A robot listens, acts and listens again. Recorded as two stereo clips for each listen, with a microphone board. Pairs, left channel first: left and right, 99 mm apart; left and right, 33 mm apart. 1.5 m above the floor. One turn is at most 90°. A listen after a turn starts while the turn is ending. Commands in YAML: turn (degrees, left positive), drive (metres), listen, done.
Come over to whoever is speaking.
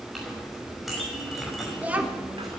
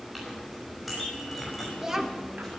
turn: -30
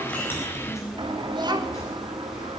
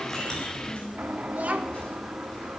turn: -90
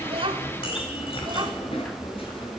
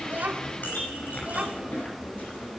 turn: -50
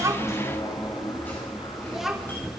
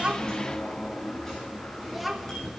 drive: 1.0
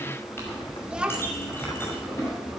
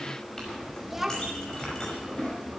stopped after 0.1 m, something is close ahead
turn: -10
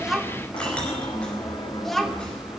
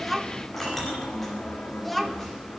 done: "Something is in my way. I am facing the child speaking but have not reached it."